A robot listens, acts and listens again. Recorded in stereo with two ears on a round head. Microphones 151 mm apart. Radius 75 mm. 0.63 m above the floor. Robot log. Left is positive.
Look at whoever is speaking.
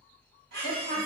note: The woman speaking: about 50° right or 130° right.
cmd yaw -50
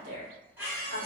note: So it is at 65° right.
cmd yaw -65
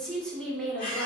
end: Facing the woman speaking, 1 to 2 m away.